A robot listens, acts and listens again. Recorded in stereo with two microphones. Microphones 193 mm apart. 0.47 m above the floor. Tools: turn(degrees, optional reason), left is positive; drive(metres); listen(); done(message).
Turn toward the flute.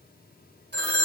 listen()
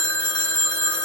listen()
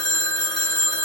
done("I can't make out a flute to turn to.")